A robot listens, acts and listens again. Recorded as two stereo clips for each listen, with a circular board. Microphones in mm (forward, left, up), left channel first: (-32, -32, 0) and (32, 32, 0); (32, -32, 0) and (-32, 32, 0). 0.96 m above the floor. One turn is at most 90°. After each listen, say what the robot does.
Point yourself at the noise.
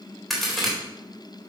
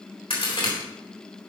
Turn 45° right.
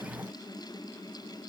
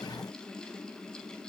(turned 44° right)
Facing where the crack came from. I can't hear it now.